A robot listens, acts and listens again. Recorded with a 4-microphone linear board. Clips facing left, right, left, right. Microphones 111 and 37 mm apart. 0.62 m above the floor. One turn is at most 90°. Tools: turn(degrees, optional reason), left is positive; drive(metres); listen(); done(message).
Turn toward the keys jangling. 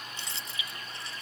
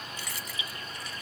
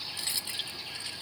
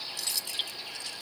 turn(degrees=25, reason="The keys jangling: about 25° left or 155° left.")
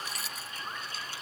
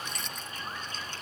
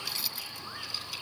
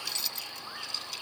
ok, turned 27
done("Facing the keys jangling.")